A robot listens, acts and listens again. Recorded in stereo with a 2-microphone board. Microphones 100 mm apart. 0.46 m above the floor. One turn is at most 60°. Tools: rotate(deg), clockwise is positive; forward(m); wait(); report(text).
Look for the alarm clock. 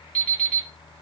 rotate(-30)
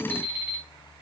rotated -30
rotate(15)
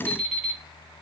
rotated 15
report("Facing the alarm clock.")